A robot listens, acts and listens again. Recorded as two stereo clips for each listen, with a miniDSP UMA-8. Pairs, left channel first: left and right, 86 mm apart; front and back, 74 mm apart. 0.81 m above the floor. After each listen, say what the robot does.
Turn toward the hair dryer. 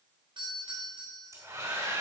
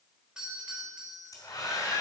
Turn 35° right.
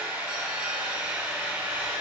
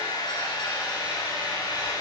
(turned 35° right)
Turn 20° right.
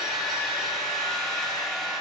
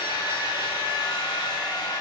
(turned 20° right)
Facing the hair dryer.